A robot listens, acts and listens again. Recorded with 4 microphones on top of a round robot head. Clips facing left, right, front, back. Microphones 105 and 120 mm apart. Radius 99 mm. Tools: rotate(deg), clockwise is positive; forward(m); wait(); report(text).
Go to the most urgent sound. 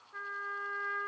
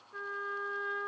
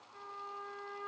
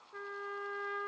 wait()
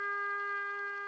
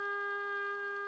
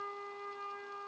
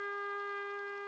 wait()
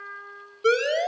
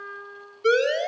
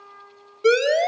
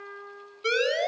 rotate(-35)
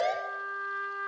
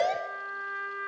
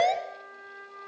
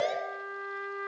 forward(1.0)
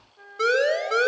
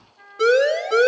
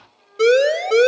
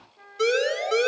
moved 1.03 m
forward(1.0)
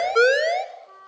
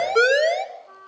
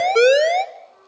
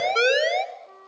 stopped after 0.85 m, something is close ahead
report("Arrived at the siren, straight ahead.")